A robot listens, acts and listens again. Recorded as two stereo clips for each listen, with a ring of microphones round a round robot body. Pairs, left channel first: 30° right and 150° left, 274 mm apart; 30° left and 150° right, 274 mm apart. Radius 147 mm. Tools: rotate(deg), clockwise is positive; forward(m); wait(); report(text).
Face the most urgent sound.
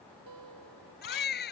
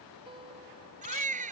rotate(85)
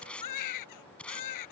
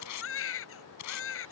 rotate(15)
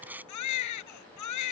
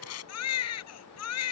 report("Facing the baby crying.")